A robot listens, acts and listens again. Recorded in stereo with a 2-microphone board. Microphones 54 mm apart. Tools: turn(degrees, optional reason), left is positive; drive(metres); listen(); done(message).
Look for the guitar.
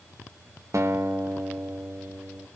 turn(degrees=-70, reason="The guitar: about 70° right or 110° right.")
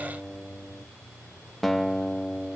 done("Found it: a guitar, straight ahead, 1 to 2 m away.")